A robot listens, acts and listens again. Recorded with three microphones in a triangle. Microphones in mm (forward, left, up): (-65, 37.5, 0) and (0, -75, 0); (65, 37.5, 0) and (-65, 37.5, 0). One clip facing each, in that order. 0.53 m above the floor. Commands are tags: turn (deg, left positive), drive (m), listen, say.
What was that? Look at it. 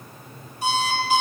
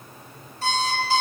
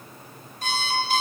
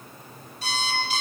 <turn deg="45"/>
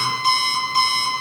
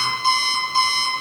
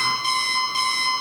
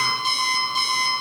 <say>Facing the alarm clock.</say>